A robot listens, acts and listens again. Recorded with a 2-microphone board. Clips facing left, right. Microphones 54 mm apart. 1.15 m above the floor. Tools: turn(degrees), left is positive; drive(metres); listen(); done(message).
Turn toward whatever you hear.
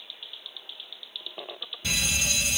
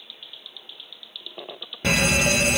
turn(degrees=-55)
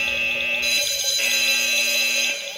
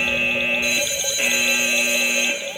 turn(degrees=-20)
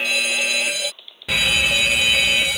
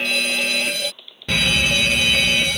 done("Facing the fire alarm.")